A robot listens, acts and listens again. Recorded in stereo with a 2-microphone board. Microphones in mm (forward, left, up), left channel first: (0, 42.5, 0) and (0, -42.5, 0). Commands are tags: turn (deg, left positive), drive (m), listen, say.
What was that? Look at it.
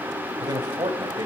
<turn deg="-60"/>
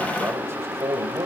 <turn deg="-35"/>
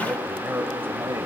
<turn deg="-25"/>
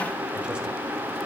<listen/>
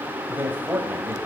<turn deg="-25"/>
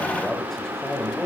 <say>Found it: a man speaking, straight ahead.</say>